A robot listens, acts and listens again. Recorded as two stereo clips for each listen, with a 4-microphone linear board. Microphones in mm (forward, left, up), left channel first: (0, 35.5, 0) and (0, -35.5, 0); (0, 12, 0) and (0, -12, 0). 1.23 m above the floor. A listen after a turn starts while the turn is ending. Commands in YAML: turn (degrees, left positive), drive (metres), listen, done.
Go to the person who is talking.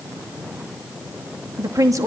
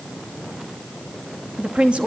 turn: -50
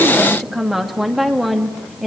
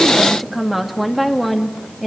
drive: 1.0
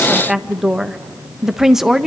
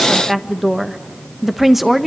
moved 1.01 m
turn: -10
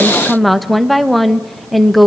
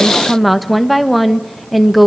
drive: 1.0
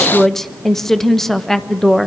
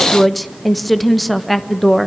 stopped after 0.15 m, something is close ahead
done: "Arrived at the woman speaking, straight ahead."